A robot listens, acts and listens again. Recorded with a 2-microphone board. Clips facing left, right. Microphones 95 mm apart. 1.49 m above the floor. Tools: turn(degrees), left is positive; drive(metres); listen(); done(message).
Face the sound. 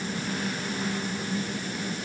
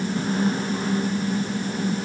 listen()
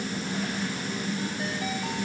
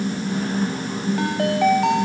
turn(degrees=-90)
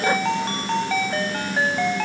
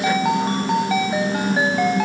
turn(degrees=-10)
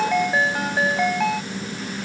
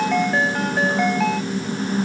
done("Found it: a ringtone, straight ahead.")